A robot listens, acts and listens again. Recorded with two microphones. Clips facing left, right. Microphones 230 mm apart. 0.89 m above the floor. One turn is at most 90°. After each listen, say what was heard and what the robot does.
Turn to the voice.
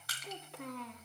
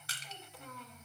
The child speaking: about 70° left or 110° left. Turn 70° left.
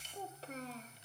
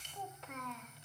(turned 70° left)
So it is at 35° left. Turn 35° left.
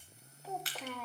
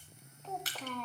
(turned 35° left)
The child speaking is now 10° left. Turn 10° left.
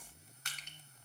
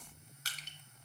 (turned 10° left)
Keep listening.
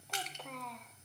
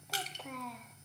Found it: a child speaking, straight ahead, under 1 m away.